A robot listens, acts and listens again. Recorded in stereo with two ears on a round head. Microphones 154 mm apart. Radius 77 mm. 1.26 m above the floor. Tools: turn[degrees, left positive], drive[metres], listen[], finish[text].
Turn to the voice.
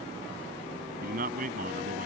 Thought: The man speaking: about 50° right or 130° right.
Action: turn[-50]
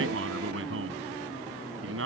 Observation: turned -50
Thought: So it is at 85° right.
Action: turn[-85]
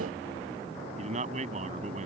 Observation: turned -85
Thought: The man speaking is now 40° right.
Action: turn[-40]
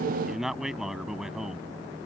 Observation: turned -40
Action: finish[Found it: a man speaking, straight ahead.]